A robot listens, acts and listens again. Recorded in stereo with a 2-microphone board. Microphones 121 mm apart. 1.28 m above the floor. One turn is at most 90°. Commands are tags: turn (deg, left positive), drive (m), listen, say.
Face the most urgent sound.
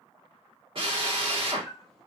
<listen/>
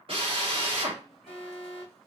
<turn deg="45"/>
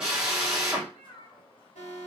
<turn deg="90"/>
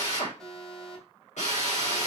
<say>Found it: an alarm, straight ahead.</say>